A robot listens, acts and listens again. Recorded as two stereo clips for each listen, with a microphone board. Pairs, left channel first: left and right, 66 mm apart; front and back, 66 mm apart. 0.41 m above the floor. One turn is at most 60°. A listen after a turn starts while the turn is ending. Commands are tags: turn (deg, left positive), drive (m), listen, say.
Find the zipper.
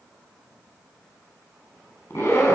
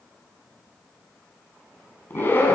<turn deg="50"/>
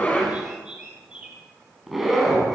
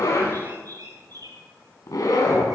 <say>Found it: a zipper, straight ahead, 2 to 4 m away.</say>